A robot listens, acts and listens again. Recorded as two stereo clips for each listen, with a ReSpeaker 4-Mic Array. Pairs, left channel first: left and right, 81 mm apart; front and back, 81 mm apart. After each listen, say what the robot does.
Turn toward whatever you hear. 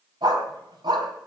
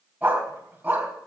Turn 110° right.
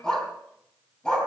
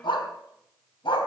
Turn 10° left.
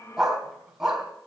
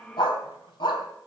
Found it: a dog barking, straight ahead, 2 to 4 m away.